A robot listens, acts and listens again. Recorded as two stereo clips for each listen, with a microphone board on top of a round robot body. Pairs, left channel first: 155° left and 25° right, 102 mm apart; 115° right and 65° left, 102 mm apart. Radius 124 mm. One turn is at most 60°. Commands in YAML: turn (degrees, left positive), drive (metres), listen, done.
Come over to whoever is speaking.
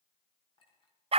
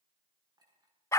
listen: true
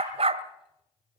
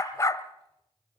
listen: true
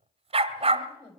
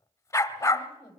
turn: -60
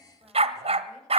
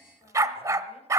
turn: -60
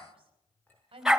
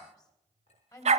turn: -60
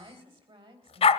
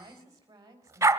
turn: 10
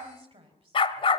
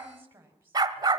drive: 1.0
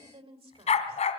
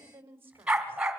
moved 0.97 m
drive: 1.0
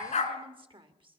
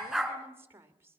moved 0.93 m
drive: 1.0
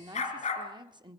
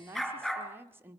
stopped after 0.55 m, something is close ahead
done: "I am next to the woman speaking."